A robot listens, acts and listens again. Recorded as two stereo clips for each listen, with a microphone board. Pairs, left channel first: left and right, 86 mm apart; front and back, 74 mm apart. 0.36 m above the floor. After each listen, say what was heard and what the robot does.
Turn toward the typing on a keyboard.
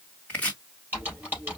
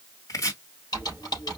The typing on a keyboard: 25° right. Turn 25° right.
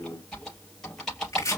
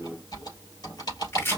Facing the typing on a keyboard, 2 to 4 m away.